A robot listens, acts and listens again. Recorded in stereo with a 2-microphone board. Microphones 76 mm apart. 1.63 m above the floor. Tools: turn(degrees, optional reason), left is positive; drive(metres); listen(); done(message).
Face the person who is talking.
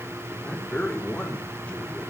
turn(degrees=15, reason="The man speaking: about 15° left or 165° left.")
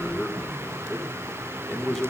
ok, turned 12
done("Found it: a man speaking, straight ahead, over 4 m away.")